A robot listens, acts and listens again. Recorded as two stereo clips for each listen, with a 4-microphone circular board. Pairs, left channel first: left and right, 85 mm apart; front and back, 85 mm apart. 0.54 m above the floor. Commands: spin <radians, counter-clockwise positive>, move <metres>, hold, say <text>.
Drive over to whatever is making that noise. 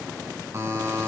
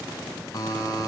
spin -0.70
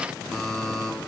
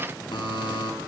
move 1.0
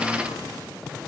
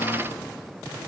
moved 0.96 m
hold
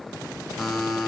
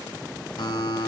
move 1.0
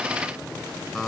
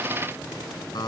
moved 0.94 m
move 1.0
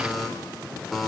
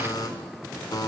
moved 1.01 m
move 1.0
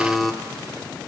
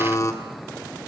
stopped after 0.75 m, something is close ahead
say I am next to the buzzer.